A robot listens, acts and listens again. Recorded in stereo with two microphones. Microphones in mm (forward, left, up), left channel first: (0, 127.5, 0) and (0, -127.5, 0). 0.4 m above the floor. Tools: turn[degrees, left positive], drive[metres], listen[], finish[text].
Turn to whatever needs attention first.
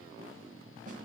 Action: listen[]
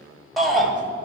Action: turn[30]
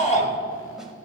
Thought: So it is at 145° left.
Action: turn[145]
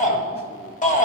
Thought: The shout is now 35° left.
Action: turn[35]
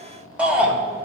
Action: finish[Facing the shout, 1 to 2 m away.]